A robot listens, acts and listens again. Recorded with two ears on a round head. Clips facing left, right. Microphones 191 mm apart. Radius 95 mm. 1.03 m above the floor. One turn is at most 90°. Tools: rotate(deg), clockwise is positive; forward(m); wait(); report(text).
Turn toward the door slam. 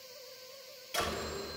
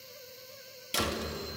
rotate(50)
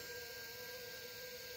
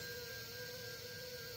wait()
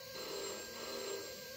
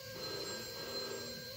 report("I heard a door slam, but can't make it out now. It was about straight ahead or 80° right.")